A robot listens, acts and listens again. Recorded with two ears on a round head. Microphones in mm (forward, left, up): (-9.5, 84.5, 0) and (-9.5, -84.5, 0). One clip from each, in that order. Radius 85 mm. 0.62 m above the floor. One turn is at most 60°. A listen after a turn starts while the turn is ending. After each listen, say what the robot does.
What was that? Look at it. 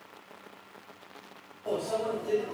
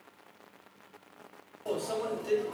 Turn 55° right.
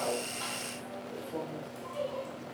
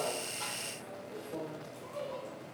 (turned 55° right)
Found it: a microwave, straight ahead, 1 to 2 m away.